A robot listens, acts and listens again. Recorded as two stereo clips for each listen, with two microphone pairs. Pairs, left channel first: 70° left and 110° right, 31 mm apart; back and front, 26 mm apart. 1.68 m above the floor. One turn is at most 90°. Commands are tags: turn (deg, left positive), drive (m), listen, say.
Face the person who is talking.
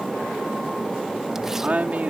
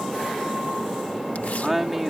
<turn deg="-75"/>
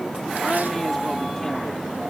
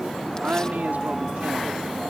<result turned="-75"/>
<turn deg="-10"/>
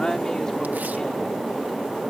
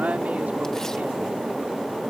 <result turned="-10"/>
<listen/>
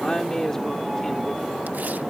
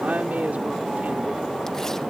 <say>Facing the woman speaking.</say>